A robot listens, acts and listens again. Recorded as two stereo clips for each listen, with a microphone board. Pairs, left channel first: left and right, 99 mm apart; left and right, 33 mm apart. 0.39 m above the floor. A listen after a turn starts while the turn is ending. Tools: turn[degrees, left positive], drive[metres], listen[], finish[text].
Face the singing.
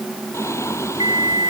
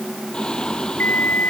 Thought: The singing: about 30° left or 150° left.
Action: turn[30]
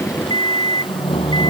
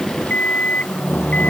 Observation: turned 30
Thought: So it is at 120° left.
Action: turn[120]
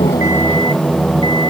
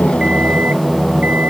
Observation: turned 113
Thought: The singing is now 10° left.
Action: turn[10]
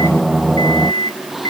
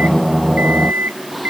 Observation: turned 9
Action: finish[Found it: singing, straight ahead.]